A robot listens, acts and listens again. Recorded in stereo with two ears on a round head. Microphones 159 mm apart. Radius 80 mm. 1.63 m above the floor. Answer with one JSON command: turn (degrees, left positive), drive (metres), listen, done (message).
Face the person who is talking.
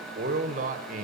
{"turn": -45}
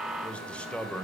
{"done": "Found it: a man speaking, straight ahead, 1 to 2 m away."}